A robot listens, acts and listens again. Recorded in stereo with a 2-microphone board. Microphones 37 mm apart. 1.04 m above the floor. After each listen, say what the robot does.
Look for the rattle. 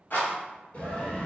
Turn 55° left.
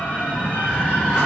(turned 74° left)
Keep listening.
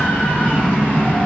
Keep listening.
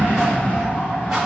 I heard a rattle, but can't make it out now. It was about 20° right or 50° left.